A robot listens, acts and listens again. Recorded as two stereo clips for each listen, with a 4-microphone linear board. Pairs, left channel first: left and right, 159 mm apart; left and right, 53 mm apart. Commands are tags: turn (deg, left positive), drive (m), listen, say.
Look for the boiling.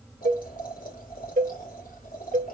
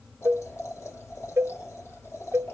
<turn deg="60"/>
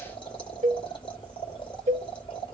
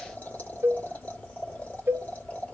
<turn deg="35"/>
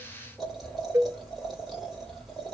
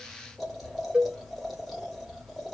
<say>Found it: boiling, straight ahead.</say>